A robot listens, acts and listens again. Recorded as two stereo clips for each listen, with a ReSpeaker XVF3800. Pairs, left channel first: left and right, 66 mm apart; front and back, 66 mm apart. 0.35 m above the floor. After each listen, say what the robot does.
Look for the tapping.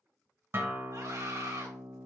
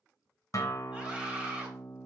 Keep listening.
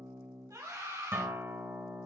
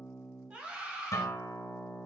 Keep listening.
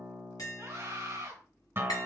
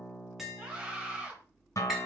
Turn 95° left.
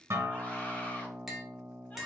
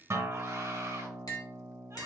Found it: tapping, straight ahead, 1 to 2 m away.